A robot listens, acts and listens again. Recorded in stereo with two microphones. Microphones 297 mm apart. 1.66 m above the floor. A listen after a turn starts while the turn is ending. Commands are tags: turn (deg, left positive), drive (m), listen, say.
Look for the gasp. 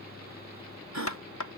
<turn deg="-65"/>
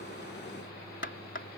<listen/>
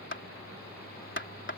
<say>I heard a gasp, but can't make it out now. It was about straight ahead or 50° right.</say>